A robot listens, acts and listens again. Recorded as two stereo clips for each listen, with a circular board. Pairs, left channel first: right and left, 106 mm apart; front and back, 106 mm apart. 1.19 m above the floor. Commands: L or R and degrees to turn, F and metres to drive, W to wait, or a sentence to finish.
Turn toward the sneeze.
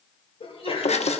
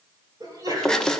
R125
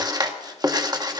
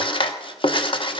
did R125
I heard a sneeze from this way, but can't make it out now.